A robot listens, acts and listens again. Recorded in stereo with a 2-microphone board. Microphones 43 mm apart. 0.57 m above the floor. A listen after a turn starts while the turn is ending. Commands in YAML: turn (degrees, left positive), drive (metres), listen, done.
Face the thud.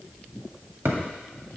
turn: -90
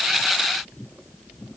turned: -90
done: "I heard a thud from this way, but can't make it out now."